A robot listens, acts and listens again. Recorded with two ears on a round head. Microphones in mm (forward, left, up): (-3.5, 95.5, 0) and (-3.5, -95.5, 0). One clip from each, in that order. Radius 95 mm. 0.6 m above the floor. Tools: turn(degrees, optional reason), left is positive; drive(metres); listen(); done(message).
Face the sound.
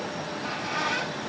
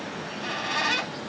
turn(degrees=-90)
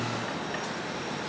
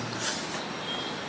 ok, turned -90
listen()
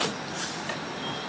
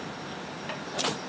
listen()
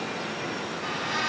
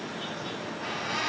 done("Facing the squeak.")